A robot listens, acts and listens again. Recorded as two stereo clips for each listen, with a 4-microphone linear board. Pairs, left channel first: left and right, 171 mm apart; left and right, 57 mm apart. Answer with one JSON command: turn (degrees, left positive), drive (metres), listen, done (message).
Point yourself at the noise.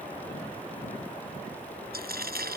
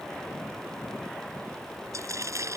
{"turn": -75}
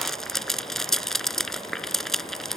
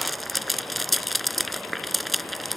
{"done": "Facing the frying."}